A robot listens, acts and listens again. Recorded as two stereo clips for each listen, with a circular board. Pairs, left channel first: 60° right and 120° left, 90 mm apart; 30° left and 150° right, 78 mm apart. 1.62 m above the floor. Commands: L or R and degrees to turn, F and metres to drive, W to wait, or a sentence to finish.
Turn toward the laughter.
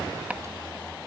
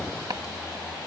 W
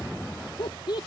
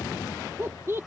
R95
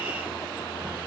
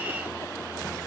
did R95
W
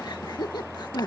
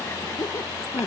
R25
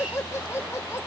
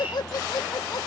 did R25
Found it: laughter, straight ahead.